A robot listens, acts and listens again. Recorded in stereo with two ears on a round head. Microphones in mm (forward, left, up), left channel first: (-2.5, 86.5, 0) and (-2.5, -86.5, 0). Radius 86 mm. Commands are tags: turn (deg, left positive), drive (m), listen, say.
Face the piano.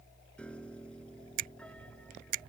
<turn deg="30"/>
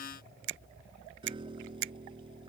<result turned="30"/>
<turn deg="-25"/>
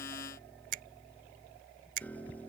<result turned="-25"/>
<turn deg="10"/>
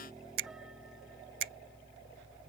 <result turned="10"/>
<listen/>
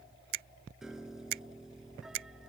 <say>Found it: a piano, straight ahead.</say>